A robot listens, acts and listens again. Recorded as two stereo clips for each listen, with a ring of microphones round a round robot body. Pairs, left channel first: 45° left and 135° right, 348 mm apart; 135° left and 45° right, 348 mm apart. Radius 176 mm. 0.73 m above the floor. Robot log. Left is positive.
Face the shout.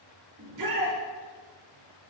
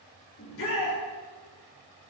note: The shout: 170° right.
cmd yaw -170
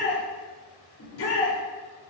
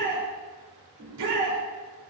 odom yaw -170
end: Found it: a shout, straight ahead, 2 to 4 m away.